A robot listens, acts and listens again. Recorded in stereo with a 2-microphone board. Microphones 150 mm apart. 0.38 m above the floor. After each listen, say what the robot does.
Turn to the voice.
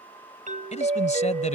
Turn 50° left.
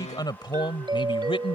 Turn 35° left.
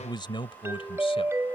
Turn 35° left.
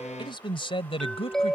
Turn 40° left.
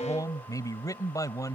Turn 25° left.
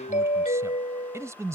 Turn 20° right.
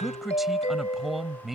Found it: a man speaking, straight ahead.